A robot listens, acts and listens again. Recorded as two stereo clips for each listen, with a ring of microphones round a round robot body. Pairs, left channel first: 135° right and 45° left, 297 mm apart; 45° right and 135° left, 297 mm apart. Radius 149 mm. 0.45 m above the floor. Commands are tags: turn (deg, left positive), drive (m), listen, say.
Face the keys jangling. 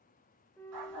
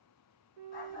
<listen/>
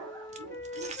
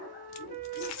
<turn deg="-20"/>
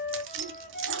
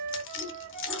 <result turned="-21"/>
<say>Found it: keys jangling, straight ahead.</say>